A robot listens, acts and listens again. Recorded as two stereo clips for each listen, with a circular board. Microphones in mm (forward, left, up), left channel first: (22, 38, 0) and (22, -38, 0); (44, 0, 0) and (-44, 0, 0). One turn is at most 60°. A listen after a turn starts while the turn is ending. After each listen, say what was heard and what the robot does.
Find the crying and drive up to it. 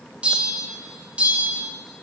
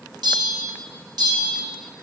Keep listening.
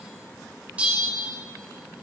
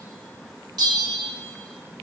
Keep listening.
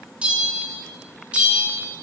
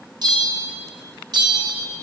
I can't make out crying to turn to.